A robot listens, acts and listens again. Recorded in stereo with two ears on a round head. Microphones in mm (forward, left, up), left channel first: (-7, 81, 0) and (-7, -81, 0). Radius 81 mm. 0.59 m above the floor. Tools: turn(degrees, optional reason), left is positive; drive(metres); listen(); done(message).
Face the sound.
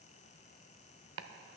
turn(degrees=-90)
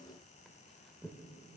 done("Found it: chopping, straight ahead, under 1 m away.")